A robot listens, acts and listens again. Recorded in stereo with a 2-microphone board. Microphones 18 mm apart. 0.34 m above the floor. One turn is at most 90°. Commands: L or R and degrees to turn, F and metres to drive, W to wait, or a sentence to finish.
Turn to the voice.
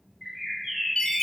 W
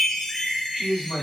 R50
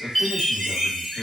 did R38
R80
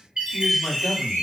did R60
R20
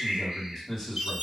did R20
Facing the man speaking, 1 to 2 m away.